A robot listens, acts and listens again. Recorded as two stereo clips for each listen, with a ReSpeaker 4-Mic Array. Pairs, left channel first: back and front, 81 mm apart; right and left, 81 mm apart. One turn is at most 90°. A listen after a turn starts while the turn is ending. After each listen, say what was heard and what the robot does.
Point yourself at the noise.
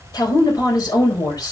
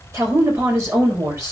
The woman speaking: 145° left. Turn 90° left.
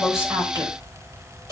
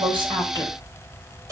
The woman speaking is now 45° left. Turn 45° left.
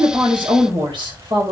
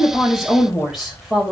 Found it: a woman speaking, straight ahead, 2 to 4 m away.